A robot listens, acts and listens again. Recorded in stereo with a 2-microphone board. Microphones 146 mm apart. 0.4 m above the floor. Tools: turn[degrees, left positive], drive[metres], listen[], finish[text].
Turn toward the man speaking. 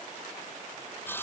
Action: listen[]
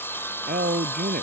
Action: turn[-90]
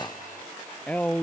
Thought: So it is at 10° left.
Action: turn[10]
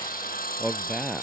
Action: finish[Found it: a man speaking, straight ahead.]